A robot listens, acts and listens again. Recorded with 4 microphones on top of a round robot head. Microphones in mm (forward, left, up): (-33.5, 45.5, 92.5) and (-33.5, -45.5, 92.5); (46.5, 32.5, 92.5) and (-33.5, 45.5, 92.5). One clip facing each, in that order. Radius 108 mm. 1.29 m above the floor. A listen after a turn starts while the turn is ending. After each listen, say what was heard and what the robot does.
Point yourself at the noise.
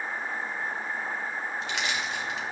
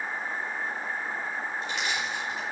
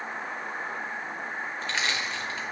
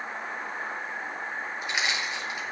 The crushing: 95° left. Turn 95° left.
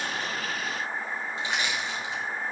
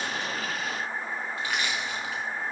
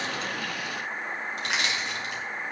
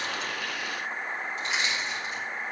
The crushing is now 20° left. Turn 20° left.
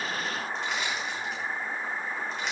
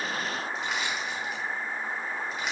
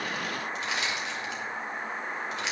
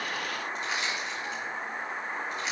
Facing the crushing.